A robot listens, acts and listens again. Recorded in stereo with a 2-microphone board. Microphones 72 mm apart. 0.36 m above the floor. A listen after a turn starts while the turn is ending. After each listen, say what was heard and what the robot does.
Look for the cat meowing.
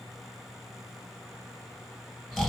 Keep listening.
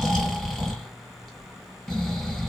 Keep listening.
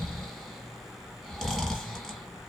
I can't make out a cat meowing to turn to.